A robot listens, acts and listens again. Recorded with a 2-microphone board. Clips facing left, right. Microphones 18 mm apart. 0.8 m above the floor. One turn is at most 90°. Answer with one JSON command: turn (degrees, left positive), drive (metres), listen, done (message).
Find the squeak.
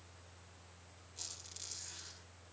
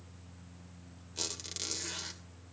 {"turn": -50}
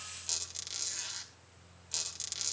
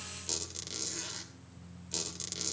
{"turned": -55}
{"done": "Facing the squeak."}